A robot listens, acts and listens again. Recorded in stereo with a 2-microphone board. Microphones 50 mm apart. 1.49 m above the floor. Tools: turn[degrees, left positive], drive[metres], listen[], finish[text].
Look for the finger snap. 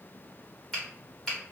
Action: turn[30]
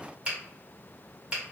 Thought: So it is at 20° right.
Action: turn[-20]
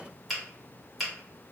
Action: finish[Found it: a finger snap, straight ahead.]